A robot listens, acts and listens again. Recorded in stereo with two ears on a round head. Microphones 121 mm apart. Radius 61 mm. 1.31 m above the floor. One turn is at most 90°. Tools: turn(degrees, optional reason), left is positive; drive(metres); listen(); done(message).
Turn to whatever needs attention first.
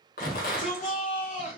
turn(degrees=55, reason="The shout: about 55° left or 125° left.")
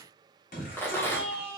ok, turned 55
turn(degrees=65, reason="So it is at 65° left.")
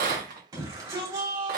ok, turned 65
turn(degrees=-25, reason="The shout is now 25° right.")
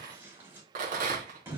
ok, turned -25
turn(degrees=-15, reason="The shout is now 15° right.")
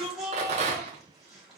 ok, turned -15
done("Facing the shout.")